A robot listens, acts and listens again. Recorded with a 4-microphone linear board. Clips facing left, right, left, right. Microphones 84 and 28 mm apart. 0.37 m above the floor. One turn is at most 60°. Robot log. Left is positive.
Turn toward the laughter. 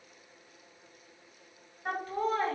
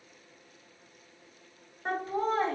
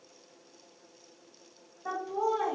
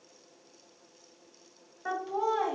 note: The laughter: about 20° right or 160° right.
cmd yaw -20
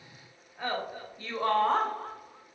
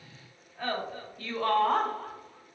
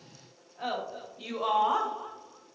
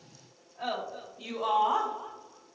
note: So it is at 30° left.
cmd yaw +30
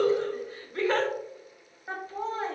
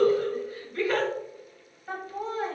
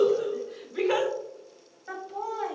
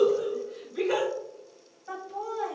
note: The laughter is now 30° left.
cmd yaw +30
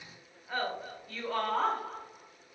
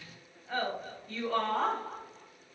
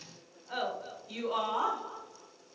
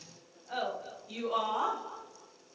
end: Facing the laughter, 1 to 2 m away.